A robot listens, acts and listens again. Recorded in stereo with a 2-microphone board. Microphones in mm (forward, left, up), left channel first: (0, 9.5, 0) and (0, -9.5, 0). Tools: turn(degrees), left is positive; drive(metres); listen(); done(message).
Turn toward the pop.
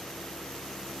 listen()
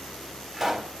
turn(degrees=-15)
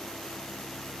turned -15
listen()
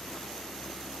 done("I heard a pop, but can't make it out now. It was about straight ahead or 150° right.")